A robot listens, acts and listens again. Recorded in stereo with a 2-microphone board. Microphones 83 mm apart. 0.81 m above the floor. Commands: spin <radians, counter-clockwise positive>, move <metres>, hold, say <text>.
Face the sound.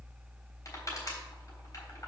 spin 0.79
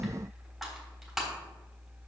say Found it: crushing, straight ahead, 2 to 4 m away.